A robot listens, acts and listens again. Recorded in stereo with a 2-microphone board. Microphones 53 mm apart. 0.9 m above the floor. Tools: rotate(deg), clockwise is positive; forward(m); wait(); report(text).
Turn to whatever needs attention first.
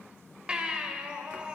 rotate(20)
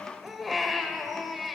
report("Found it: a baby crying, straight ahead.")